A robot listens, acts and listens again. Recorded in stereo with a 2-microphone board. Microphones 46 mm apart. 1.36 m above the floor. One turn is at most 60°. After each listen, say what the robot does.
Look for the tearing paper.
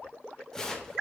Turn 30° left.
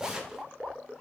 Turn 15° right.
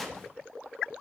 Facing the tearing paper.